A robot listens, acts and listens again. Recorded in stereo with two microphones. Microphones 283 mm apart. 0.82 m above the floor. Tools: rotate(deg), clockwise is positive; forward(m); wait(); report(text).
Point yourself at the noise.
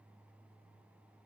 wait()
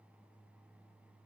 wait()
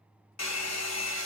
rotate(-70)
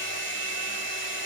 rotate(-45)
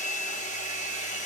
rotate(-25)
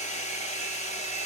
rotate(-25)
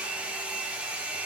report("Found it: a hair dryer, straight ahead.")